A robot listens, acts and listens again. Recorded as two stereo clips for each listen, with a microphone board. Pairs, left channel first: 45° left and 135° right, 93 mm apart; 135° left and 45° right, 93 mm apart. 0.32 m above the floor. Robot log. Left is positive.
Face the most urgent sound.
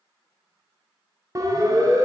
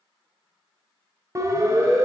note: The siren: 95° right.
cmd yaw -95
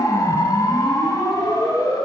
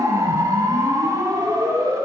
end: Facing the siren, 2 to 4 m away.